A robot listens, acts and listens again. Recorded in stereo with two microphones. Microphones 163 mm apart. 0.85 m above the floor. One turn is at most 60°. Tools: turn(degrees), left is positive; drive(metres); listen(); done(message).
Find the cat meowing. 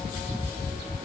listen()
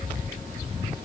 listen()
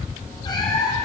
turn(degrees=20)
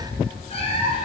turn(degrees=35)
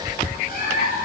turn(degrees=60)
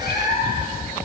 turn(degrees=60)
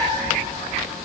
turn(degrees=15)
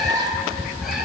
done("Found it: a cat meowing, straight ahead, over 4 m away.")